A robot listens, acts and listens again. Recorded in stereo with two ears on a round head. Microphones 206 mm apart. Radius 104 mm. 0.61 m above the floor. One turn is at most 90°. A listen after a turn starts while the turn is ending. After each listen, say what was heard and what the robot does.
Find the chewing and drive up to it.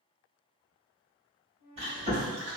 The chewing: about 25° right or 155° right. Turn 25° right.
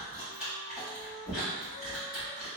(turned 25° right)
Drive 1.0 m forward.
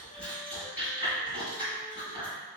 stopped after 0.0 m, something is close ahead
Something is in my way. I am facing the chewing but have not reached it.